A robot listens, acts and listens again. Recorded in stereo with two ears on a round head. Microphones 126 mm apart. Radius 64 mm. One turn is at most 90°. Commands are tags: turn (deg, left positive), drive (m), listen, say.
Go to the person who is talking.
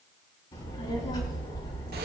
<turn deg="30"/>
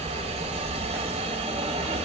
<drive m="1.0"/>
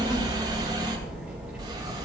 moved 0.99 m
<drive m="1.0"/>
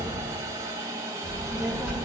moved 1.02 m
<drive m="1.0"/>
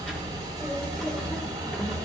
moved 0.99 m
<drive m="1.0"/>
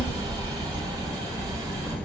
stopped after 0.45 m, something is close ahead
<turn deg="10"/>
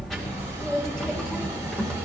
<say>I am next to the child speaking.</say>